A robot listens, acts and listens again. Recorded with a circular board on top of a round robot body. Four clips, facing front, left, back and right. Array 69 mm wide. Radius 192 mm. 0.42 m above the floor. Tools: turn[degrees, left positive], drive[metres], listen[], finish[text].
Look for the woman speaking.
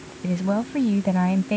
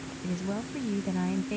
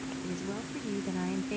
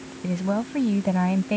Thought: The woman speaking: 40° right.
Action: turn[-40]
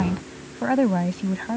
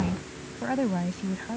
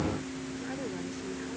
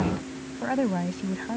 Thought: The woman speaking is now 10° right.
Action: turn[-10]
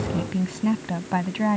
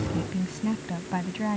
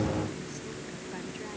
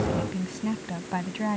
Action: finish[Facing the woman speaking.]